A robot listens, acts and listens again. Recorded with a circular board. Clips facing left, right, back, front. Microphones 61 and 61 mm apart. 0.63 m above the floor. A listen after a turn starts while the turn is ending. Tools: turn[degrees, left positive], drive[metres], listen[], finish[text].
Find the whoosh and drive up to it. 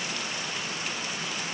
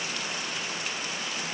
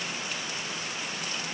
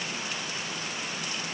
Action: listen[]
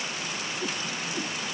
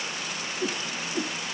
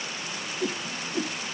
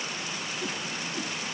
Thought: The whoosh: 150° right.
Action: turn[-150]
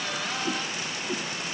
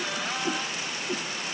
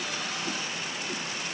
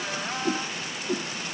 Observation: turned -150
Thought: The whoosh is now 10° right.
Action: turn[-10]
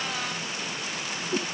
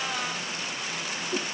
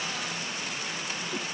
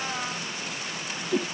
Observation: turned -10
Action: drive[1.0]
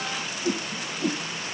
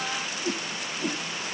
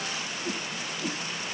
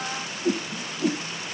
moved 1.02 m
Action: drive[1.0]
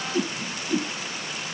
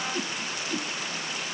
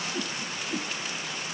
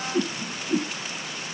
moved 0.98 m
Thought: The whoosh is now 20° left.
Action: turn[20]
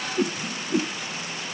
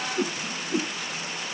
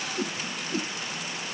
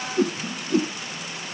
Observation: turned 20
Action: drive[1.0]
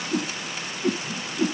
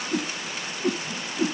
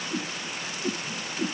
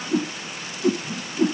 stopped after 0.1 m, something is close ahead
Action: finish[I am next to the whoosh.]